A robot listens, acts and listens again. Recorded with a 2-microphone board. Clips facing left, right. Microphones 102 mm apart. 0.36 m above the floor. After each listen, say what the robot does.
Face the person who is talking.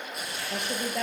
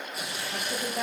Turn 90° left.
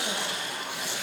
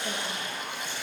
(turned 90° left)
Keep listening.
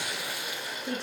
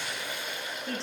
Turn 10° left.
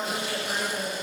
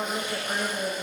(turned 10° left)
Facing the woman speaking.